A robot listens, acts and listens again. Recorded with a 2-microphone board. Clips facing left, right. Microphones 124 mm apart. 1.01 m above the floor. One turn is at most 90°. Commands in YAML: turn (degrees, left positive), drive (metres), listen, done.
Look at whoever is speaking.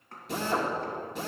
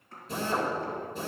listen: true
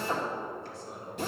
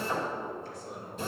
turn: 30
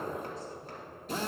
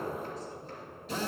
listen: true
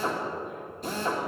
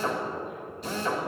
listen: true
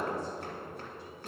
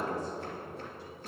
done: "I heard a man speaking, but can't make it out now. It was about straight ahead or 120° left."